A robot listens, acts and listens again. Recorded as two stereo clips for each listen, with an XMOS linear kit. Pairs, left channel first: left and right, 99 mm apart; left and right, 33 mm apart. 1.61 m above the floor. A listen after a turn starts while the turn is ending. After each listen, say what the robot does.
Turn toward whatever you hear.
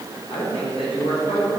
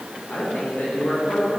Turn 90° left.
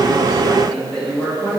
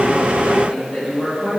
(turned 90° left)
Turn 10° left.
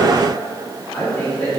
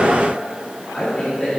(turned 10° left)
Turn 15° left.
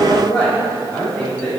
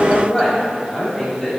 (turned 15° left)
Turn 10° left.
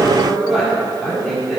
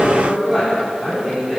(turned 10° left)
Found it: a woman speaking, straight ahead, 2 to 4 m away.